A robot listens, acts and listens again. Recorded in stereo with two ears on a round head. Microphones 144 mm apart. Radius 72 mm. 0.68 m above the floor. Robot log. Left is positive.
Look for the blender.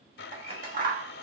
note: The blender: about 70° left or 110° left.
cmd yaw +70
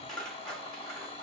note: So it is at 35° left.
cmd yaw +35
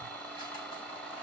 end: Found it: a blender, straight ahead.